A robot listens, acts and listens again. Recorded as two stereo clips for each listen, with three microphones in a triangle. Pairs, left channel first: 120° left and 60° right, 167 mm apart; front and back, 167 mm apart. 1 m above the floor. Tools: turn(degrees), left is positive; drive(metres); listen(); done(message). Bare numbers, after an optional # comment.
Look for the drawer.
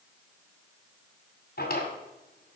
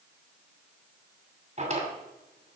# The drawer: 135° left.
turn(135)
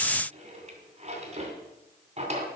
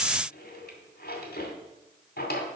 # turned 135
# The drawer is now 10° right.
turn(-10)
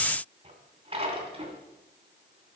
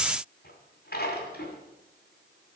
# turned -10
done("Facing the drawer.")